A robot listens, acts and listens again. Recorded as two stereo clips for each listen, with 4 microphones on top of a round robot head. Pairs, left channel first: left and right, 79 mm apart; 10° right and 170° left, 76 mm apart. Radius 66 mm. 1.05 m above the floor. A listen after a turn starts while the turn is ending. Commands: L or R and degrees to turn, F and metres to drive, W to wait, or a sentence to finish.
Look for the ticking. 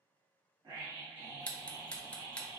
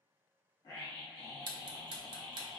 L165
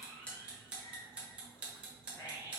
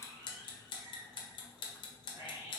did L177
R10
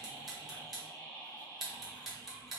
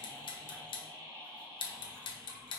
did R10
Found it: ticking, straight ahead.